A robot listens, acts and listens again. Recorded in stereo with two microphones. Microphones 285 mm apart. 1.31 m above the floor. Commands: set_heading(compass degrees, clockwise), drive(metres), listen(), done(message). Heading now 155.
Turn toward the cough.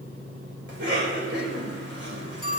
set_heading(195)
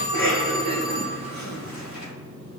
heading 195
set_heading(295)
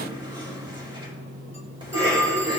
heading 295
set_heading(310)
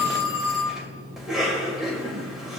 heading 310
done("Facing the cough, 2 to 4 m away.")